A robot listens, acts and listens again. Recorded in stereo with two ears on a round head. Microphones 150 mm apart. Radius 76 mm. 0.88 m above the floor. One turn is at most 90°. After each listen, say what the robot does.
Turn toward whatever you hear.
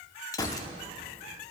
Turn 20° left.
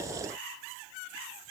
Keep listening.
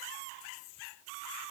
I heard a gunshot, but can't make it out now. It was about straight ahead or 140° left.